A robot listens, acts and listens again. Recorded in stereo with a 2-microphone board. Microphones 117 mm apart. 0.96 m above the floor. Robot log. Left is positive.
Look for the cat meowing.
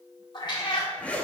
note: The cat meowing: about 40° left or 140° left.
cmd yaw +40
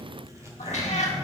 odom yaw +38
note: So it is at 100° left.
cmd yaw +100
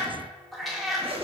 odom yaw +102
end: Found it: a cat meowing, straight ahead.